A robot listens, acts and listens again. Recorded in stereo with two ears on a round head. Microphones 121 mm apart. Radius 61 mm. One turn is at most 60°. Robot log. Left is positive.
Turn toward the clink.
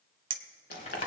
note: The clink: about 40° right or 140° right.
cmd yaw -40
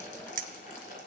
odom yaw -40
note: So it is at 95° right.
cmd yaw -60
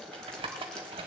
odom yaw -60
note: Nothing new. It was at 35° right.
cmd yaw -35
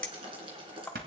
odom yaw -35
note: The clink is now 10° left.
cmd yaw +10
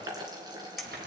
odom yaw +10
end: Facing the clink, under 1 m away.